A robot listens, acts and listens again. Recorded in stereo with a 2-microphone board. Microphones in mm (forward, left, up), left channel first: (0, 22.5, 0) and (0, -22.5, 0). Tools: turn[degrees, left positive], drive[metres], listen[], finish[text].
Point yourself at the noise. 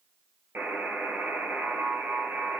Thought: The buzzer: about 65° right or 115° right.
Action: turn[-65]
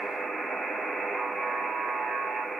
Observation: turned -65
Action: finish[Facing the buzzer, 2 to 4 m away.]